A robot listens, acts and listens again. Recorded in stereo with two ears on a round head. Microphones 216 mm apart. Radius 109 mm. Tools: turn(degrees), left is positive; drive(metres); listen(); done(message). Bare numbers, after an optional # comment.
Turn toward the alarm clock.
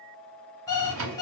turn(30)
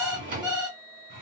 # So it is at 15° right.
turn(-15)
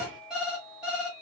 done("Facing the alarm clock, 1 to 2 m away.")